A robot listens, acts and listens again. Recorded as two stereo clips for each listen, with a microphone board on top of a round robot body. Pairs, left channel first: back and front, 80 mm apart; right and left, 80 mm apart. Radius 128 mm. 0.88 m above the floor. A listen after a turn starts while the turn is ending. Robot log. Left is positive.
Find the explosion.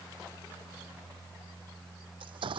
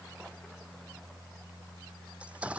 note: The explosion: 15° left.
cmd yaw +15
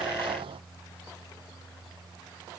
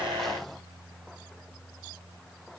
end: Facing where the explosion came from. I can't hear it now.